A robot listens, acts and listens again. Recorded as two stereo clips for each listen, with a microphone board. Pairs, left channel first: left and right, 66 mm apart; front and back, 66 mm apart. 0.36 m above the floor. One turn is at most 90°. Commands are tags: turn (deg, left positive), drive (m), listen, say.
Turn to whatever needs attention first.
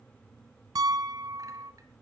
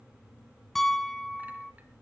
<listen/>
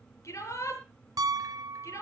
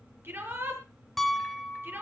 <turn deg="90"/>
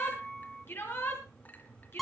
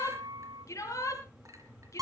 <turn deg="35"/>
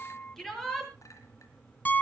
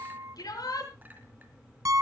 <say>Found it: a shout, straight ahead, over 4 m away.</say>